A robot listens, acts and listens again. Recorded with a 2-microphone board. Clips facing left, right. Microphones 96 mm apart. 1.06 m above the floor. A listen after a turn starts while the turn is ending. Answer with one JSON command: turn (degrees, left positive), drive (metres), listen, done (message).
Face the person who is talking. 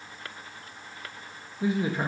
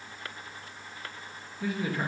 {"turn": 20}
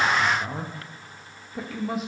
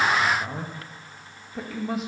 {"done": "Found it: a man speaking, straight ahead, under 1 m away."}